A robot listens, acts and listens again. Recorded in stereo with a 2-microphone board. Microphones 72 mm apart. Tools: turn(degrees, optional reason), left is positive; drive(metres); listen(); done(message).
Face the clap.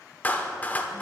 turn(degrees=25, reason="The clap: about 25° left or 155° left.")
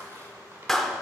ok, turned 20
done("Facing the clap.")